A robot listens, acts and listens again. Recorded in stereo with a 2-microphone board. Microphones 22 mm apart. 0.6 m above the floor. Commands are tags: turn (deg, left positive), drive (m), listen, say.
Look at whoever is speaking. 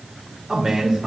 <turn deg="-40"/>
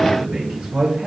<turn deg="-110"/>
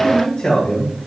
<turn deg="60"/>
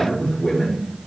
<turn deg="10"/>
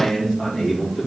<say>Found it: a man speaking, straight ahead, 2 to 4 m away.</say>